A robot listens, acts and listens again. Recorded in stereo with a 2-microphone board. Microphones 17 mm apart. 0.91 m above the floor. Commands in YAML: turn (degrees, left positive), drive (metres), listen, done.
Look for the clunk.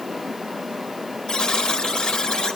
listen: true
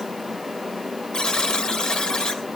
listen: true
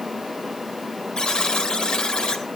done: "I can't make out a clunk, only a buzzer."